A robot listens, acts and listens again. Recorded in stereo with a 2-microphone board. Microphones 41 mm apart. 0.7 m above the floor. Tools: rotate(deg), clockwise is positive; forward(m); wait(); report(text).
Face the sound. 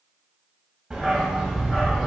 rotate(-30)
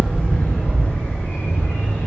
rotate(-115)
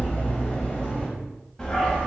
rotate(-10)
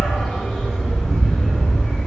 report("Found it: a dog barking, straight ahead, 1 to 2 m away.")